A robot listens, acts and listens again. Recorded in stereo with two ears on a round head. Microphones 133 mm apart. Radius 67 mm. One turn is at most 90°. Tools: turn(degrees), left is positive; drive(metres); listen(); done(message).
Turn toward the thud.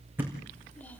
turn(degrees=-30)
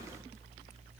listen()
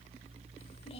done("I heard a thud, but can't make it out now. It was about 20° left or 140° right.")